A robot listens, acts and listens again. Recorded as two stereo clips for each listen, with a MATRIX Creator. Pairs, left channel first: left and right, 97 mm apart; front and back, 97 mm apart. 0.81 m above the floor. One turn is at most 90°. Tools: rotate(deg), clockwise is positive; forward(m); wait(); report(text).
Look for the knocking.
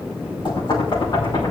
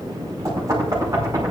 rotate(-90)
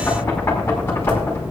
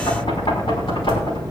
rotate(-25)
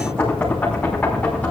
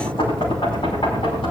rotate(-15)
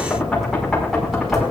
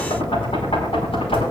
report("Facing the knocking, over 4 m away.")